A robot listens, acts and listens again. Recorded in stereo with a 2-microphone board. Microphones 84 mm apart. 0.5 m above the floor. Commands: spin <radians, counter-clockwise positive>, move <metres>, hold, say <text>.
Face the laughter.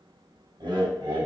spin -1.13
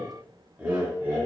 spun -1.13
spin -0.35
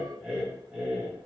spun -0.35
spin -0.17
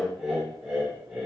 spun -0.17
spin -0.17
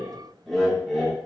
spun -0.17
say Facing the laughter.